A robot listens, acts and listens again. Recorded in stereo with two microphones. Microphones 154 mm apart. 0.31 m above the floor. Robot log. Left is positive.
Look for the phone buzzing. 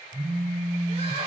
note: The phone buzzing: about 70° right or 110° right.
cmd yaw -70
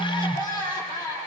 end: Found it: a phone buzzing, straight ahead, over 4 m away.